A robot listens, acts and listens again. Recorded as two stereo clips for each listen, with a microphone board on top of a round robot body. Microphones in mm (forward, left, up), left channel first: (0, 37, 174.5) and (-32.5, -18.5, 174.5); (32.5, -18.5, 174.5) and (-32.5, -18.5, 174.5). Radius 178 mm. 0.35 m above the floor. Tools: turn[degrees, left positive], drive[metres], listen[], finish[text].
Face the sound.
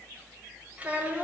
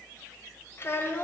Thought: The child speaking: 60° right.
Action: turn[-60]
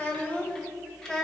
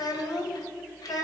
Thought: The child speaking is now 25° right.
Action: turn[-25]
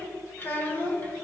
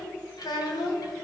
Action: finish[Found it: a child speaking, straight ahead.]